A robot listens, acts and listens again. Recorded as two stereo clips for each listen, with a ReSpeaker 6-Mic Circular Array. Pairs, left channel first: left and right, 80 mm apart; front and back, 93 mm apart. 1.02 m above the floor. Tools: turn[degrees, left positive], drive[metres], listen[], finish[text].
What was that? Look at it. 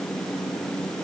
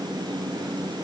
Action: listen[]
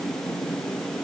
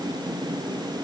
Action: listen[]
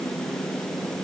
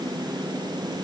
Action: finish[I can't make out anything.]